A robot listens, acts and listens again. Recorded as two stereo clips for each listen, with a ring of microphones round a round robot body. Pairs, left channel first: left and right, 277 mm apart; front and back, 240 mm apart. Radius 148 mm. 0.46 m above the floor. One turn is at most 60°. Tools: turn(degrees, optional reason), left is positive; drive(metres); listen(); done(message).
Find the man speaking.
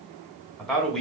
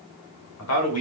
done("Facing the man speaking.")